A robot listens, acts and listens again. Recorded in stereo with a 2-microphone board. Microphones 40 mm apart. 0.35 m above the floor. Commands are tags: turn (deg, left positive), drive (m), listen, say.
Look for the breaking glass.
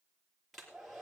<listen/>
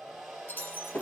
<turn deg="50"/>
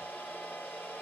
<listen/>
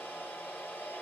<say>I heard breaking glass, but can't make it out now. It was about straight ahead or 80° left.</say>